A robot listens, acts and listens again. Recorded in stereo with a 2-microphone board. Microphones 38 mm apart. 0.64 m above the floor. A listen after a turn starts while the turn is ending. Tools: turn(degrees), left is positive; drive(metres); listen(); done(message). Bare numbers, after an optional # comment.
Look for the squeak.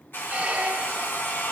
# The squeak: about 40° right or 140° right.
turn(-40)
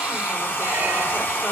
listen()
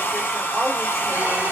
listen()
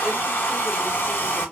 done("I heard a squeak, but can't make it out now. It was about straight ahead or 100° right.")